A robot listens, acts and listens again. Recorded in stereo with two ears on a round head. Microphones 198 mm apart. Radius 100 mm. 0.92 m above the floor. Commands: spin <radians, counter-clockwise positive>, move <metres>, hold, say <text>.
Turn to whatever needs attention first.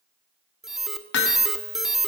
spin 0.52
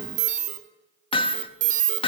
spin -0.61
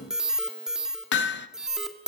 say Found it: an alarm, straight ahead, 1 to 2 m away.